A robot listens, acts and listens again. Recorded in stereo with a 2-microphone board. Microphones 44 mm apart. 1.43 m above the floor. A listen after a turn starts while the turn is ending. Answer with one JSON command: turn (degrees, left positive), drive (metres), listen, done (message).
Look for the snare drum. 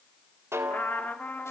{"turn": -90}
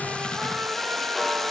{"listen": true}
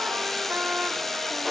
{"listen": true}
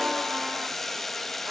{"done": "I heard a snare drum from this way, but can't make it out now."}